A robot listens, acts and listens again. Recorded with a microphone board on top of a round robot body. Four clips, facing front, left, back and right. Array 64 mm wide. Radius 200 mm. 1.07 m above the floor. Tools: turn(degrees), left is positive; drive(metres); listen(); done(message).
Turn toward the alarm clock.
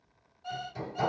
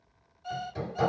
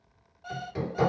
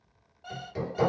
turn(degrees=-120)
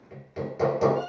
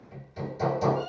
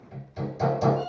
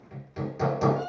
done("Found it: an alarm clock, straight ahead, 1 to 2 m away.")